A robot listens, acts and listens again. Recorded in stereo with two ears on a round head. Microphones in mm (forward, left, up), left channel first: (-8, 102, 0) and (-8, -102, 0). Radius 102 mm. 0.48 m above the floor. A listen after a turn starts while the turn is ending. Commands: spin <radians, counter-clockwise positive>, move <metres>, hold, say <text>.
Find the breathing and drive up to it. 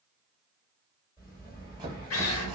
spin 0.35
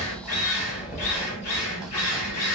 spin 2.44
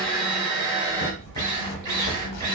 spin 0.61
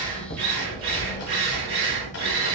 spin 0.17
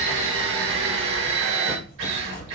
move 1.0
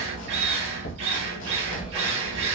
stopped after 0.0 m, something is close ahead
say Something is in my way. I am facing the breathing but have not reached it.